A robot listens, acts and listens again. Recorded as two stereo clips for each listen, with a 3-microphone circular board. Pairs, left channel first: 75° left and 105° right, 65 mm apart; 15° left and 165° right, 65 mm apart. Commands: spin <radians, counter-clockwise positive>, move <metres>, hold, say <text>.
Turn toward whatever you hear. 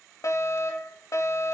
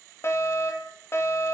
spin 0.96
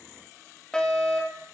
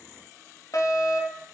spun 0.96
say Found it: a fire alarm, straight ahead.